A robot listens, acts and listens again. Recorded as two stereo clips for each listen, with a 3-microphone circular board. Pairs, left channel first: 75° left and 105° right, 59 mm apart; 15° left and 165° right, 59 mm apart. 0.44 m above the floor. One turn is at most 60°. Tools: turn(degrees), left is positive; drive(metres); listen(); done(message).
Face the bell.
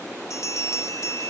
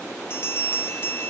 turn(degrees=55)
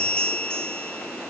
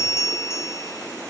done("Found it: a bell, straight ahead, 1 to 2 m away.")